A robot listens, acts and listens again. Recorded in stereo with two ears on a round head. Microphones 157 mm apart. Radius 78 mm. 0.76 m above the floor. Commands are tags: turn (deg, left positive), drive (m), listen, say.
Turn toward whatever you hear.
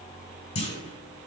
<turn deg="40"/>
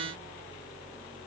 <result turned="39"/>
<listen/>
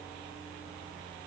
<say>I heard a clunk, but can't make it out now. It was about straight ahead or 105° left.</say>